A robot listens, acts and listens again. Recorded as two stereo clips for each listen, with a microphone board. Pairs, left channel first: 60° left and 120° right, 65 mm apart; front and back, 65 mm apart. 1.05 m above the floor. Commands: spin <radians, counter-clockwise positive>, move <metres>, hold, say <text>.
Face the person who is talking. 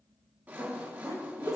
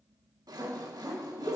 spin 0.79
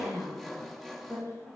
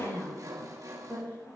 spin 0.26
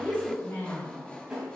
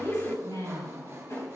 say Found it: a woman speaking, straight ahead, over 4 m away.